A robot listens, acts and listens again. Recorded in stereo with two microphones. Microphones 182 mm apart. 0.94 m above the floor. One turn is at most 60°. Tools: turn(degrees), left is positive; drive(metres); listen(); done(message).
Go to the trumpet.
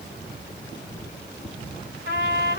turn(degrees=60)
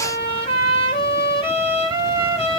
turn(degrees=30)
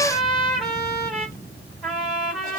drive(metres=1.0)
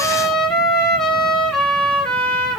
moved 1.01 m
drive(metres=1.0)
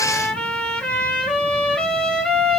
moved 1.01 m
drive(metres=1.0)
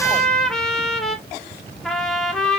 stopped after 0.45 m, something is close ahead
done("I am next to the trumpet.")